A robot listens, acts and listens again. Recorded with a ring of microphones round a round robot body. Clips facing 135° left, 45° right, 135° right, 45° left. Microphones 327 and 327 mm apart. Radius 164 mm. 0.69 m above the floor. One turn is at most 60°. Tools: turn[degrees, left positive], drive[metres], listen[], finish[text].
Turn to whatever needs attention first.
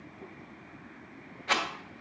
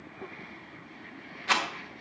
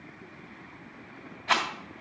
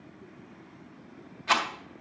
Action: listen[]
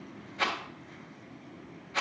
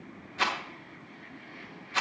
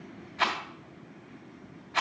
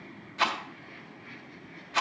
Action: listen[]
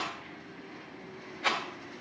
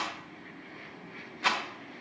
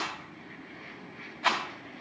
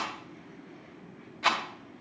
Action: finish[I can't make out anything urgent, only a rattle.]